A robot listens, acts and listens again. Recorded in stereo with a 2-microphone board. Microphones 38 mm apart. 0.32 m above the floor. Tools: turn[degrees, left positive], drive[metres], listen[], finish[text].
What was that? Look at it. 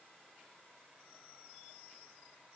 Action: listen[]
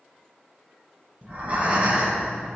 Thought: The breathing: about 35° right or 145° right.
Action: turn[-35]
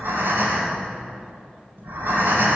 Thought: So it is at 105° right.
Action: turn[-105]
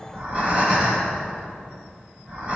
Thought: The breathing is now 30° right.
Action: turn[-30]
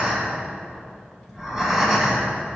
Thought: The breathing is now 15° right.
Action: turn[-15]
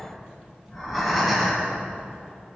Action: finish[Found it: breathing, straight ahead.]